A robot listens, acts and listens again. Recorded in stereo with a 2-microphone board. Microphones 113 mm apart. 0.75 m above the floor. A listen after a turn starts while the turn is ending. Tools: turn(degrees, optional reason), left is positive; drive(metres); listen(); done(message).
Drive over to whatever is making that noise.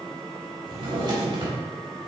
turn(degrees=-45, reason="The drawer: about 45° right or 135° right.")
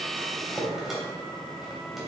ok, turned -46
drive(metres=1.0)
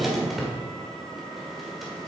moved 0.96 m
drive(metres=1.0)
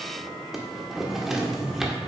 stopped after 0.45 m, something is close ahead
done("Arrived at the drawer, straight ahead.")